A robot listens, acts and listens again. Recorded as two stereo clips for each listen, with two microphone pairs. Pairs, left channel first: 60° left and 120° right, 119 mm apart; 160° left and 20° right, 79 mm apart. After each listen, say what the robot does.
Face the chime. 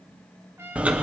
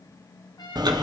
Keep listening.
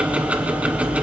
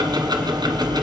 Keep listening.
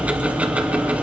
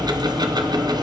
I can't make out a chime to turn to.